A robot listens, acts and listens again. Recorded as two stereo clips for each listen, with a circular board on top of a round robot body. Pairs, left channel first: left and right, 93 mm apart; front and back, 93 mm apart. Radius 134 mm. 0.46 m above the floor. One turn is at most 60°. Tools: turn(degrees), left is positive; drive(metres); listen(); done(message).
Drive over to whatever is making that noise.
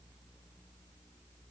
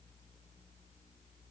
listen()
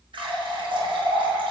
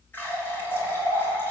turn(degrees=-60)
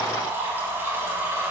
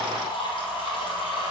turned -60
turn(degrees=-25)
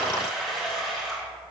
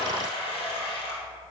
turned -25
drive(metres=1.0)
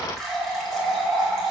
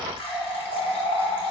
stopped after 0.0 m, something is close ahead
done("Blocked. The running tap is further on, straight ahead.")